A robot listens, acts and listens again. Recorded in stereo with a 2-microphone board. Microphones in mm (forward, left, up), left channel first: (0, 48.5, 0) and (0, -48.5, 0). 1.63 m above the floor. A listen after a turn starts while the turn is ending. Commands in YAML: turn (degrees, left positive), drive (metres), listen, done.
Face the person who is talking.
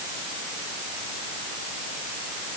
listen: true
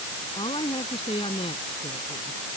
turn: 70
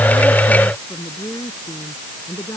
turn: 40
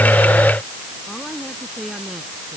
done: "Found it: a woman speaking, straight ahead."